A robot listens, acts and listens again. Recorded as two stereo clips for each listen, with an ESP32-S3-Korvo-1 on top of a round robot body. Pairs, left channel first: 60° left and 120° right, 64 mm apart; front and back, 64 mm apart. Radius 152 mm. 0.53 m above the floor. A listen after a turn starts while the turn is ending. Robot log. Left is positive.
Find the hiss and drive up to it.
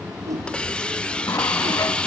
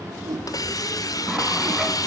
note: The hiss: 15° right.
cmd yaw -15
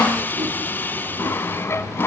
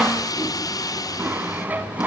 cmd fwd 1.0
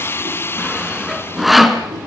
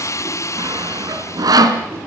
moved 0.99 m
note: The hiss is now 20° left.
cmd yaw +20
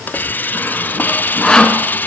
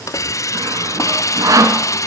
cmd fwd 1.0
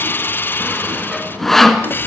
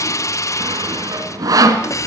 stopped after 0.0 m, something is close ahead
note: The hiss is now 10° left.
cmd yaw +10
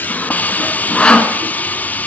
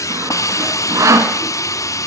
end: I am next to the hiss.